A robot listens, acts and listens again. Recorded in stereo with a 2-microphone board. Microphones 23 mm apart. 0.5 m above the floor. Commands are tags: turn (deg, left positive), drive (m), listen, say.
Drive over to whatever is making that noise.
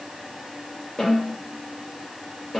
<turn deg="20"/>
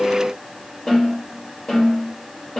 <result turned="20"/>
<turn deg="135"/>
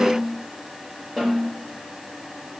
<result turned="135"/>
<turn deg="-20"/>
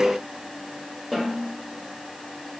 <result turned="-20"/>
<turn deg="10"/>
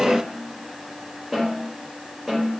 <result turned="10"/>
<drive m="1.0"/>
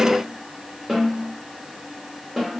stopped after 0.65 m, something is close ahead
<say>Arrived at the snare drum, straight ahead.</say>